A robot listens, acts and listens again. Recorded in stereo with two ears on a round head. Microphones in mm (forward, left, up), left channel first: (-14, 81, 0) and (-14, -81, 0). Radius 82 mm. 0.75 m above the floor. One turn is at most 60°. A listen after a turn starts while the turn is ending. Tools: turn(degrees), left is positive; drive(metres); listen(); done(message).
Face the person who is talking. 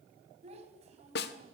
turn(degrees=-40)
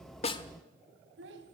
turn(degrees=-60)
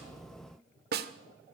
turn(degrees=-40)
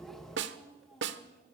done("Found it: a child speaking, straight ahead, over 4 m away.")